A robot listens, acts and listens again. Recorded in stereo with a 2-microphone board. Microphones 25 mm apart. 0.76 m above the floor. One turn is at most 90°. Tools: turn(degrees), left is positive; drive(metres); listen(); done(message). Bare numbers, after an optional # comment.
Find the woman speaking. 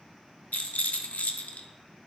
listen()
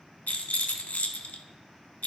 listen()
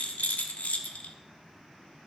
done("I can't make out a woman speaking, only a rattle.")